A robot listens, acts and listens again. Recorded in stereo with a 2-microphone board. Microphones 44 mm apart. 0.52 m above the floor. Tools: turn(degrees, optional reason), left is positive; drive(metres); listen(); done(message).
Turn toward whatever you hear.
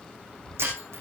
turn(degrees=-75, reason="The breaking glass: about 75° right or 105° right.")
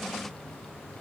listen()
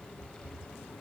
done("I heard breaking glass, but can't make it out now. It was about straight ahead or 30° right.")